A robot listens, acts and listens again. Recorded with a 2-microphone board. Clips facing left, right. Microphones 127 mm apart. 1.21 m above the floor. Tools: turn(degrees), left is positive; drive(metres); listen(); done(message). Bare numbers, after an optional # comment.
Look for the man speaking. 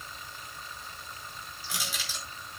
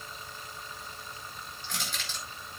listen()
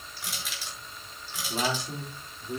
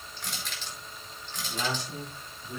# The man speaking: about 45° left or 135° left.
turn(45)
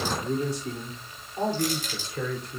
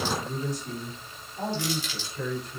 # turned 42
# So it is at 105° left.
turn(105)
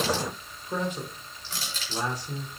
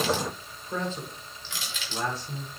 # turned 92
# The man speaking is now 15° left.
turn(15)
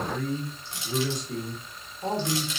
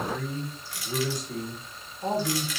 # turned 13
done("Found it: a man speaking, straight ahead, over 4 m away.")